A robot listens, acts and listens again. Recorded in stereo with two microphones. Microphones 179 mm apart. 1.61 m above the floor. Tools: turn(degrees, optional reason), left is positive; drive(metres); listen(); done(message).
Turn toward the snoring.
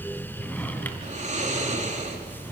turn(degrees=-40, reason="The snoring: about 40° right or 140° right.")
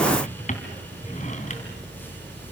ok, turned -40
listen()
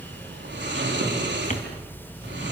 turn(degrees=-100, reason="So it is at 100° right.")
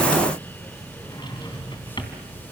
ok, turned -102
listen()
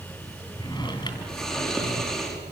done("Facing the snoring.")